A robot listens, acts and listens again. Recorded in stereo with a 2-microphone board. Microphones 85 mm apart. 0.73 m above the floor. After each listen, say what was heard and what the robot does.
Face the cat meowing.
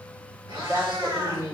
The cat meowing: about 70° right or 110° right. Turn 70° right.
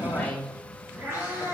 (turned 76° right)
So it is at 30° right. Turn 30° right.
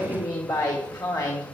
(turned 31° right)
Keep listening.
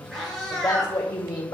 Facing the cat meowing, 2 to 4 m away.